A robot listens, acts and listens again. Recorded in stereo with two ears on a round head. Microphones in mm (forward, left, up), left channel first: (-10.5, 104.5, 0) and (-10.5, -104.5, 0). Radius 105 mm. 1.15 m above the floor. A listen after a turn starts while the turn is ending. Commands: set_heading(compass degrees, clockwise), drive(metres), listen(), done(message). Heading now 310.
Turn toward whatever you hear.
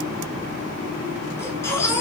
set_heading(280)
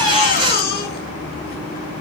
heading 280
set_heading(145)
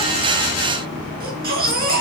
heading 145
set_heading(185)
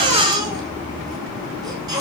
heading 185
set_heading(205)
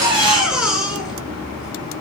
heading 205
done("Found it: a baby crying, straight ahead.")